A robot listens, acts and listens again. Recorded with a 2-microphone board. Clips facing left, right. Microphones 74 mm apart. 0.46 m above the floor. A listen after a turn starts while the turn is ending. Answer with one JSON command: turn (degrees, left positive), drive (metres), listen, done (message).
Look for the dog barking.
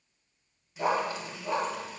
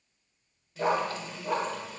{"turn": -20}
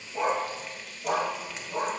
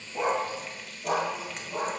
{"done": "Facing the dog barking, 2 to 4 m away."}